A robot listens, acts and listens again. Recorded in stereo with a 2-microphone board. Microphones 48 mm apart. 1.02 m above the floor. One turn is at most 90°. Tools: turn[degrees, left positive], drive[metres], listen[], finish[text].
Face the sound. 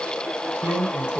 Thought: The drawer: about 35° right or 145° right.
Action: turn[-35]
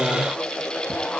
Action: listen[]
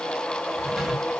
Action: listen[]
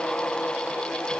Action: finish[I heard a drawer, but can't make it out now. It was about straight ahead or 110° right.]